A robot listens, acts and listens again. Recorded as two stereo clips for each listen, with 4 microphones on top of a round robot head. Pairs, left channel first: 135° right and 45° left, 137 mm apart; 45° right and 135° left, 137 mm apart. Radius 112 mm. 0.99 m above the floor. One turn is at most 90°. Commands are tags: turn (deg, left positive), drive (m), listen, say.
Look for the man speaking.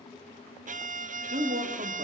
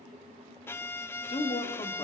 <turn deg="10"/>
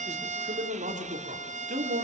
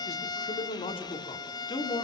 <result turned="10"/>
<turn deg="15"/>
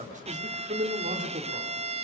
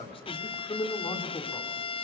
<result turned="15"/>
<turn deg="20"/>
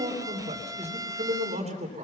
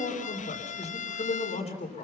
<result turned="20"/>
<say>Facing the man speaking, 2 to 4 m away.</say>